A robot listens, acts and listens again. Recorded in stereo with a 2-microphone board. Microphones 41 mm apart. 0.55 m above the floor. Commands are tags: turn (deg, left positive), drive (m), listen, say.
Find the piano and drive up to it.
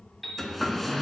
<turn deg="30"/>
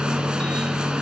<listen/>
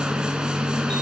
<listen/>
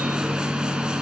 <say>I heard a piano, but can't make it out now. It was about 30° right or 150° left. I did not reach it.</say>